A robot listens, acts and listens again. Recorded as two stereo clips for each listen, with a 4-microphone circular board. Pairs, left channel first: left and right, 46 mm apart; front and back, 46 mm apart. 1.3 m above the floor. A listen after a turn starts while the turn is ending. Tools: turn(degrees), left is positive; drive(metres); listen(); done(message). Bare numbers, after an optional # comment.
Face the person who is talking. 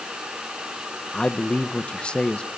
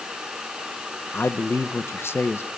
# The man speaking: 25° left.
turn(25)
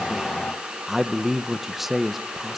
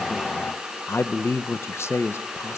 done("Facing the man speaking, 1 to 2 m away.")